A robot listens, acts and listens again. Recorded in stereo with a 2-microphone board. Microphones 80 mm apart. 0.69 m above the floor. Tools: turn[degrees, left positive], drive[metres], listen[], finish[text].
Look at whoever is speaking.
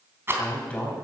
Thought: The man speaking: about 15° left or 165° left.
Action: turn[15]
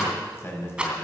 Thought: So it is at 150° left.
Action: turn[150]
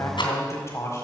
Thought: The man speaking is now 35° left.
Action: turn[35]
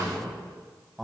Action: finish[Facing the man speaking, over 4 m away.]